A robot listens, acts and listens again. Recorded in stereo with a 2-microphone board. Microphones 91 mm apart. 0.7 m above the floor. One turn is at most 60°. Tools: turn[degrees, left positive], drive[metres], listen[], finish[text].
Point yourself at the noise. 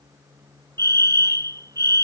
Thought: The fire alarm: about 45° right or 135° right.
Action: turn[-45]
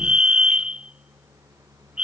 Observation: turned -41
Thought: So it is at 10° right.
Action: turn[-10]
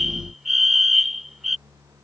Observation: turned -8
Action: finish[Found it: a fire alarm, straight ahead.]